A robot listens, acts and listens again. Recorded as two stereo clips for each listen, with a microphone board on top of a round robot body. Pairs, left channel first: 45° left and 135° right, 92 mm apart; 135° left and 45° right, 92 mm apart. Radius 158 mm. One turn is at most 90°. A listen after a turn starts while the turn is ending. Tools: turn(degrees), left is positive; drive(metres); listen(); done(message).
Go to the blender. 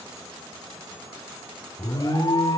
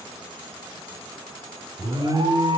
listen()
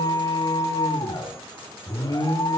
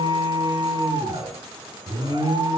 listen()
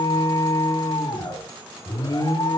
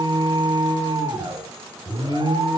done("I can't make out a blender to turn to.")